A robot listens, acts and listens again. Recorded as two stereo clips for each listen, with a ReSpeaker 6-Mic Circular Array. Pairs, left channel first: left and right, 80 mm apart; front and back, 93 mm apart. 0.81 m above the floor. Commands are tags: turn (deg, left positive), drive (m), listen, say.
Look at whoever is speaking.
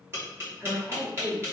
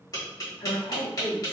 <say>Found it: a woman speaking, straight ahead, 1 to 2 m away.</say>